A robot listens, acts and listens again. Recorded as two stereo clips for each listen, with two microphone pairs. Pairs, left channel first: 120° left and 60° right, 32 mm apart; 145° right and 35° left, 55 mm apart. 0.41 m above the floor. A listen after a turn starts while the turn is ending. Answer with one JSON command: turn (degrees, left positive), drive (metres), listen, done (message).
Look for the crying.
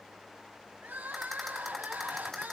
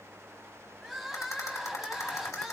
{"turn": -50}
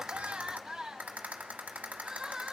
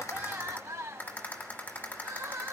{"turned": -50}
{"turn": 15}
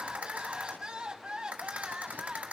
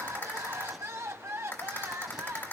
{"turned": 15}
{"done": "Facing the crying."}